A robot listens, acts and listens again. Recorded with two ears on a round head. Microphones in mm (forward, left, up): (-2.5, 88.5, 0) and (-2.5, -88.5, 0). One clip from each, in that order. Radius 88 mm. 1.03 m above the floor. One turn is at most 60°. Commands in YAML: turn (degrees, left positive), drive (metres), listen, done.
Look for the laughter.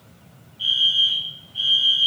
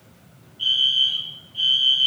listen: true
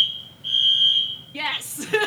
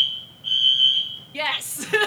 turn: -30
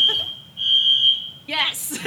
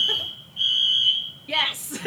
turn: 20
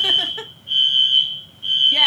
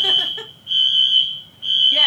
listen: true
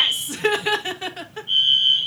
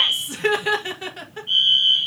done: "Found it: laughter, straight ahead."